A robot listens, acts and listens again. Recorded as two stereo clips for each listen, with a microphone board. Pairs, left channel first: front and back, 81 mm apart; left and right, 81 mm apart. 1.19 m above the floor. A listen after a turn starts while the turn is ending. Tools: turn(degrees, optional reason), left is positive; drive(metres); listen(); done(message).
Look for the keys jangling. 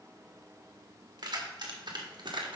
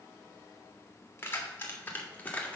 turn(degrees=160, reason="The keys jangling: 160° left.")
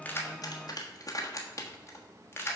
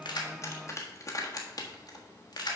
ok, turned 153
turn(degrees=60, reason="The keys jangling is now 60° left.")
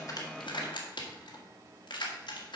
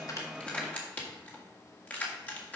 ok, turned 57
turn(degrees=20, reason="The keys jangling is now 20° left.")
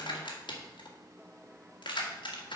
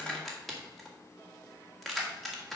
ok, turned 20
done("Found it: keys jangling, straight ahead.")